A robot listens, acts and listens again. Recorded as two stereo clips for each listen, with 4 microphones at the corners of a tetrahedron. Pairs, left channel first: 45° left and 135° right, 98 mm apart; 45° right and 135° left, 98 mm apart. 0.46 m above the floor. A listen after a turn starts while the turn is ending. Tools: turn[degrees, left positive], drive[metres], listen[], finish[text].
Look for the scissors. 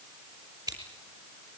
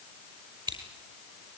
Thought: The scissors: 170° left.
Action: turn[170]
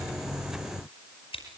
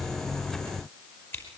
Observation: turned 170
Thought: The scissors is now 20° left.
Action: turn[20]
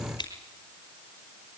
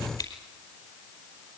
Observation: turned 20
Action: finish[Found it: scissors, straight ahead, over 4 m away.]